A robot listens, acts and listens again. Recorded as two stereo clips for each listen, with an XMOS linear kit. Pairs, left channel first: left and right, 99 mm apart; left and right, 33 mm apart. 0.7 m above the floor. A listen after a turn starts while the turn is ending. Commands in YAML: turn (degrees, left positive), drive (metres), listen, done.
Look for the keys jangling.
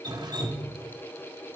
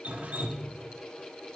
listen: true
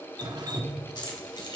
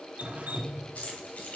turn: 50
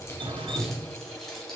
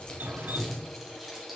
listen: true
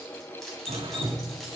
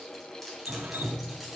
listen: true
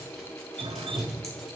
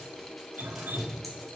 done: "I heard keys jangling, but can't make it out now. It was about straight ahead or 80° left."